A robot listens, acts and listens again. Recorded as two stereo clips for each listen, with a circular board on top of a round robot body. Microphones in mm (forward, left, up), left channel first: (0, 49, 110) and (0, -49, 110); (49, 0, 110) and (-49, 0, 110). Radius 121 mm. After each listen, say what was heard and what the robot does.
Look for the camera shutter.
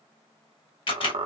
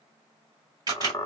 The camera shutter: 130° left. Turn 130° left.
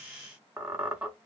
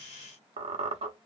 Keep listening.
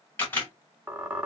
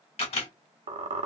The camera shutter is now 25° left. Turn 25° left.
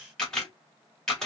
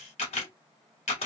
Facing the camera shutter, 1 to 2 m away.